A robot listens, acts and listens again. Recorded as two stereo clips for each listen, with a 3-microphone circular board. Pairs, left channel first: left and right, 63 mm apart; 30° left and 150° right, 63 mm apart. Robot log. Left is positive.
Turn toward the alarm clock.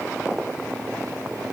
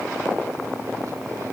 cmd idle
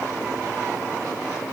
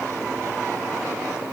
cmd idle
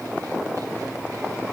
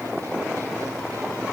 end: I can't make out an alarm clock.